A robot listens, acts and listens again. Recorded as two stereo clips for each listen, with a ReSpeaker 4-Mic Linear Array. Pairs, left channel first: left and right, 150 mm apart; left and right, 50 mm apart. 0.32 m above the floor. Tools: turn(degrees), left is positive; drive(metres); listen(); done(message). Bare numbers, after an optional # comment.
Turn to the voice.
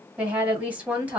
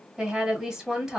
turn(-30)
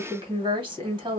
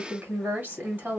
# So it is at 135° right.
turn(-135)
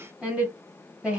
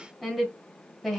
# The woman speaking is now 10° right.
turn(-10)
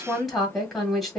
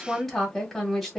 done("Found it: a woman speaking, straight ahead, 1 to 2 m away.")